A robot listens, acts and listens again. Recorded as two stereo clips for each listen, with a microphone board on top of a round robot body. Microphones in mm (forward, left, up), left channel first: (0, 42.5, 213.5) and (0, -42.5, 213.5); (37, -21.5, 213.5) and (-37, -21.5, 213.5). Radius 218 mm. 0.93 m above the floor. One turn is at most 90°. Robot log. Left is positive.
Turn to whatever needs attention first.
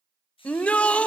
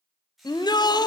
note: The shout: 15° left.
cmd yaw +15
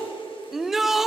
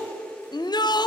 end: Found it: a shout, straight ahead.